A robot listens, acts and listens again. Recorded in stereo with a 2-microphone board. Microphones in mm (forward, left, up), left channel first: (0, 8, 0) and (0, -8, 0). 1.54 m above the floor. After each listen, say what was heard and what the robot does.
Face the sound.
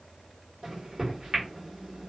The microwave: about 50° right or 130° right. Turn 50° right.
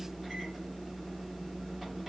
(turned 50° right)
Facing the microwave.